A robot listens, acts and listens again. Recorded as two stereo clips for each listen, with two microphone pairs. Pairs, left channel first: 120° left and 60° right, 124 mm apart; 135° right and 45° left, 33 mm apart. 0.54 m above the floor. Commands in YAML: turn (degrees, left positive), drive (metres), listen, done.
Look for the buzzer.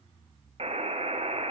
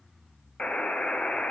turn: -90
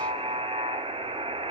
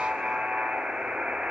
turn: -20
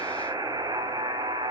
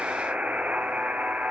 done: "Facing the buzzer."